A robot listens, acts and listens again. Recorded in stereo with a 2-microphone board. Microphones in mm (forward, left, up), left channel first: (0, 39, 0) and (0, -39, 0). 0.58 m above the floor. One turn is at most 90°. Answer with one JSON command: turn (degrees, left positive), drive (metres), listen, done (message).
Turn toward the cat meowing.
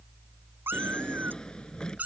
{"turn": -20}
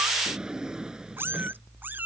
{"turn": -25}
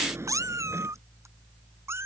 {"turn": -35}
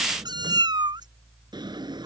{"turn": -90}
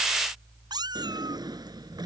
{"turn": -65}
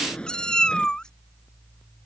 {"turn": 10}
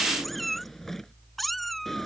{"done": "Found it: a cat meowing, straight ahead."}